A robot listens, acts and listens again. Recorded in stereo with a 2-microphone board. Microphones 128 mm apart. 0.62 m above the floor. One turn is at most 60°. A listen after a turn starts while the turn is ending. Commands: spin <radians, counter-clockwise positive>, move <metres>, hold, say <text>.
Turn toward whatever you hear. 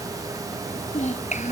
spin 1.05
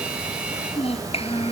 spin 0.87
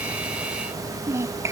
spin -0.35
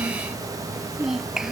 say Found it: a child speaking, straight ahead.